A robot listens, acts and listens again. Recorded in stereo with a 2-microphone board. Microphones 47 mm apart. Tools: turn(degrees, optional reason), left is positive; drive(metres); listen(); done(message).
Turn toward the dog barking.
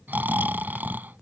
listen()
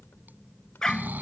turn(degrees=30)
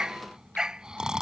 turn(degrees=-15, reason="So it is at 15° right.")
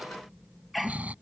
done("Found it: a dog barking, straight ahead.")